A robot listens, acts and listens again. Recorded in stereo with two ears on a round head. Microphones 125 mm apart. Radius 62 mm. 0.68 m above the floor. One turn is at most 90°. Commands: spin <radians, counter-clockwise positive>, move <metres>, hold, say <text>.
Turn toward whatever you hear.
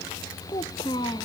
spin 0.52
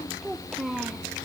say Facing the child speaking.